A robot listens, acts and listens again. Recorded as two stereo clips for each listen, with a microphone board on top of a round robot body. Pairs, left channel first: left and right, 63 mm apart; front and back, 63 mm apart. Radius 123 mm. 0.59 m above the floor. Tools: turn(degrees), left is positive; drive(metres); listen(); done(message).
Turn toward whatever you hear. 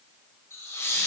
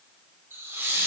turn(degrees=135)
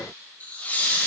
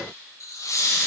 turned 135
turn(degrees=25)
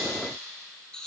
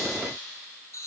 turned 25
turn(degrees=15)
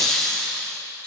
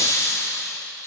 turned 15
turn(degrees=15)
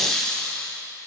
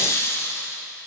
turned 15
turn(degrees=20)
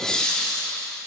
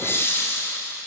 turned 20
turn(degrees=15)
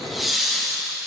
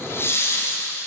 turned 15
done("Found it: laughter, straight ahead.")